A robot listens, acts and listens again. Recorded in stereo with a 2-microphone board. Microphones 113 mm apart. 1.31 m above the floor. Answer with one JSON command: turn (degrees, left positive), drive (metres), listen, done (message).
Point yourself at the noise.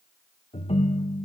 {"turn": 65}
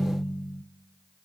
{"done": "Facing the ringtone."}